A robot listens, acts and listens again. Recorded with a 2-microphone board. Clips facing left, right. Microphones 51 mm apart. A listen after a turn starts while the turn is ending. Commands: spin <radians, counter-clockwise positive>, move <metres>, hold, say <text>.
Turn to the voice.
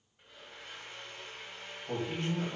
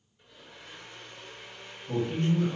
spin 1.57
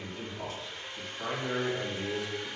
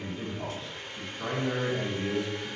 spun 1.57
say Facing the man speaking, 1 to 2 m away.